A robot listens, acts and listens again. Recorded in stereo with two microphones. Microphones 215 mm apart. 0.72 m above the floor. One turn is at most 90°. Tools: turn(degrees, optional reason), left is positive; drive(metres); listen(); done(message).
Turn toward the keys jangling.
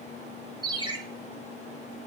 listen()
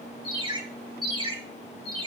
listen()
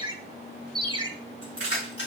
turn(degrees=55, reason="The keys jangling: about 55° left or 125° left.")
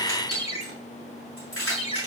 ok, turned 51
turn(degrees=75, reason="So it is at 75° left.")
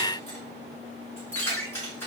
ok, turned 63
turn(degrees=10, reason="The keys jangling is now 10° left.")
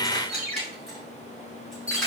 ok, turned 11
done("Facing the keys jangling, over 4 m away.")